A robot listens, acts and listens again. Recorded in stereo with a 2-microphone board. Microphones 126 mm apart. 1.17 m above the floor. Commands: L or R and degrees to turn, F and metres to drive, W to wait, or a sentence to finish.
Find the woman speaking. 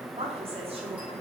R50
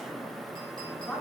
Found it: a woman speaking, straight ahead.